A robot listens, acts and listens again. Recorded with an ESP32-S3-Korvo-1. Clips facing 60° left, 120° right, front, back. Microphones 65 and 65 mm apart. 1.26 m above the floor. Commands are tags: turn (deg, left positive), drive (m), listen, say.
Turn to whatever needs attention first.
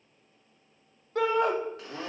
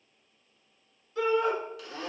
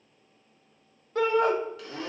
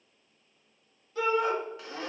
<turn deg="35"/>
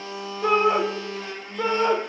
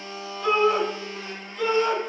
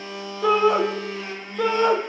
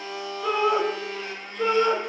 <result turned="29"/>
<say>Facing the shout.</say>